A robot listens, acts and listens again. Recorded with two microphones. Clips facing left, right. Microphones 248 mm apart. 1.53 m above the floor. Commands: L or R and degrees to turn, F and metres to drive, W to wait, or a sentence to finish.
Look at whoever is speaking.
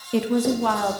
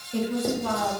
L90
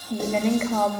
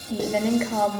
Facing the woman speaking.